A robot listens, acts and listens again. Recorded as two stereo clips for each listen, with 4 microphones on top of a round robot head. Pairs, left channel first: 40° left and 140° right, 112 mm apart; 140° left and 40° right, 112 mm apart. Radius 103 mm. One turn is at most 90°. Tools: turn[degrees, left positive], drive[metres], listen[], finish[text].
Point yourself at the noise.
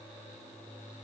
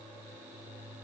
Action: listen[]
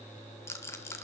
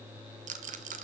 Thought: The rattle: 25° right.
Action: turn[-25]
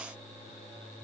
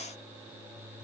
Action: listen[]
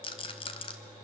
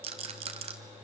Action: finish[Found it: a rattle, straight ahead.]